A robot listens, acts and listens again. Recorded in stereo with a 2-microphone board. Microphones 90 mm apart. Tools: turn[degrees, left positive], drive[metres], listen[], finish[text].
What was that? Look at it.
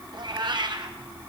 Thought: The cat meowing: about 65° right or 115° right.
Action: turn[-65]
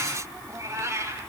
Thought: So it is at 35° right.
Action: turn[-35]
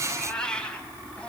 Thought: The cat meowing is now 15° left.
Action: turn[15]
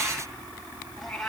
Action: finish[Facing the cat meowing, 2 to 4 m away.]